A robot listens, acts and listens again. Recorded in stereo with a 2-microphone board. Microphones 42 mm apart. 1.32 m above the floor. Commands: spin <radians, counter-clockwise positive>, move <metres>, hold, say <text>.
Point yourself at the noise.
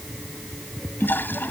spin 0.96
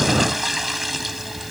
say Found it: a toilet flushing, straight ahead.